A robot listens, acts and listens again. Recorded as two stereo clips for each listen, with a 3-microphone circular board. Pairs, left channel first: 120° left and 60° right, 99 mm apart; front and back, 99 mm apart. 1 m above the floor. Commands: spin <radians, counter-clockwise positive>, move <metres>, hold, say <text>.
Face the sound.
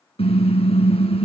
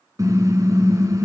spin 2.18
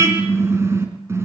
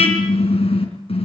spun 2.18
say Facing the car horn.